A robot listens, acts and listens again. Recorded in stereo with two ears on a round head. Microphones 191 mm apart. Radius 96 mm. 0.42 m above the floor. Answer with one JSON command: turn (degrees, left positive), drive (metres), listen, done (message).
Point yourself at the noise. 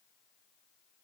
{"listen": true}
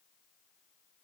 {"listen": true}
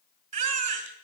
{"turn": -35}
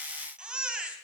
{"done": "Facing the baby crying."}